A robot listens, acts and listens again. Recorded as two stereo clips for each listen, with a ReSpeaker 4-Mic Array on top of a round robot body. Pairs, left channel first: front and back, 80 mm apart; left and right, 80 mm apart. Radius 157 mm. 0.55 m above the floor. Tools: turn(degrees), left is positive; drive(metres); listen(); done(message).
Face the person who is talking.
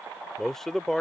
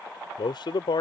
turn(degrees=85)
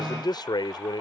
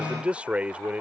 turn(degrees=-15)
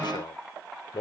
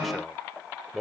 done("Found it: a man speaking, straight ahead.")